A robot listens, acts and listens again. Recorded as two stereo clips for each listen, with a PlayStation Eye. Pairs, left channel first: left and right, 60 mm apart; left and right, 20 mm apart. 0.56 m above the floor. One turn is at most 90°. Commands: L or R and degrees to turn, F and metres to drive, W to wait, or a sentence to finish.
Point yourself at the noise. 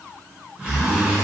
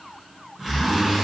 R20
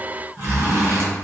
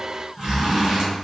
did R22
R90
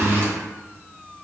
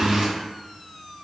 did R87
R50
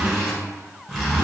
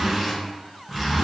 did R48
Facing the zipper, 1 to 2 m away.